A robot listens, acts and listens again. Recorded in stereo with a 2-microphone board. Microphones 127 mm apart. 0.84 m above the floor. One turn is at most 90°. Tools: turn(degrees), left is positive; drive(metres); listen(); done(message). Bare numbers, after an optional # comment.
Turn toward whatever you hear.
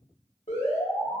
# The alarm: about 50° left or 130° left.
turn(50)
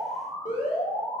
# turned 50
# So it is at 80° left.
turn(80)
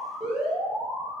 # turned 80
done("Facing the alarm.")